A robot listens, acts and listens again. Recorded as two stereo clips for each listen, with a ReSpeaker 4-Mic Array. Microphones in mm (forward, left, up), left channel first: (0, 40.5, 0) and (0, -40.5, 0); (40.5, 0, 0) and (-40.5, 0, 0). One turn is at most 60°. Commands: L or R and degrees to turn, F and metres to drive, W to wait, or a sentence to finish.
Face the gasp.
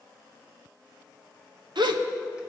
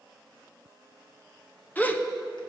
R60
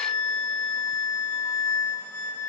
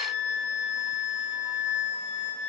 R10
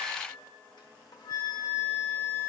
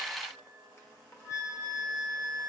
I heard a gasp from this way, but can't make it out now.